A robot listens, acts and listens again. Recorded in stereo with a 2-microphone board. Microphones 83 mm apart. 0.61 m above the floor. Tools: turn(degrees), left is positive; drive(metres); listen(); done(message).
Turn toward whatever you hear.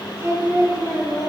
turn(degrees=-50)
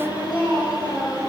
turn(degrees=-60)
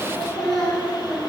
turn(degrees=15)
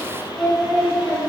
turn(degrees=10)
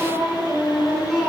done("Found it: singing, straight ahead.")